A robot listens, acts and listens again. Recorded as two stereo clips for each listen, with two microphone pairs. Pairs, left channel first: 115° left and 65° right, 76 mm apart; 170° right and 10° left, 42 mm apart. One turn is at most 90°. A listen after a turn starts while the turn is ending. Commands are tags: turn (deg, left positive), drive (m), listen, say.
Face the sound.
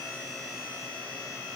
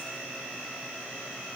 <listen/>
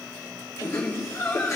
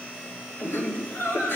<turn deg="90"/>
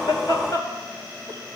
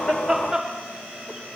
<turn deg="75"/>
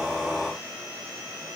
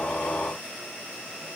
<listen/>
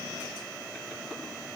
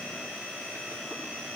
<listen/>
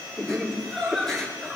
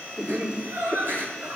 <turn deg="25"/>
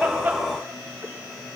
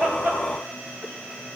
<listen/>
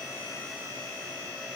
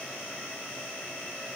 <listen/>
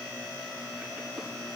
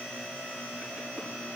<say>Facing where the laughter came from. I can't hear it now.</say>